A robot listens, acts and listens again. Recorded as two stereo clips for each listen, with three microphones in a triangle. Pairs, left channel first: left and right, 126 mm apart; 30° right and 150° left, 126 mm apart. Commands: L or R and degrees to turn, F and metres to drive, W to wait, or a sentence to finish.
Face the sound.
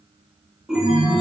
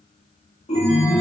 Found it: a chime, straight ahead, 1 to 2 m away.